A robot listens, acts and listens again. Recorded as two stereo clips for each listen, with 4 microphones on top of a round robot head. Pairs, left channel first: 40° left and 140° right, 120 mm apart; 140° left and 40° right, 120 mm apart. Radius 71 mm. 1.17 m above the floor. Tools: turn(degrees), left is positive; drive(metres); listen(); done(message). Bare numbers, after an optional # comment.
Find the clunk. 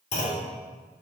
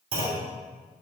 done("Found it: a clunk, straight ahead.")